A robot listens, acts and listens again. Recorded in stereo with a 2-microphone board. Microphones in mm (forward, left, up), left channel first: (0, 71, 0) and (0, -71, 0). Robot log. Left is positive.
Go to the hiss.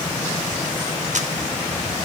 cmd idle
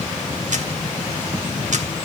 cmd idle
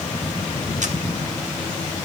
end: I can't make out a hiss.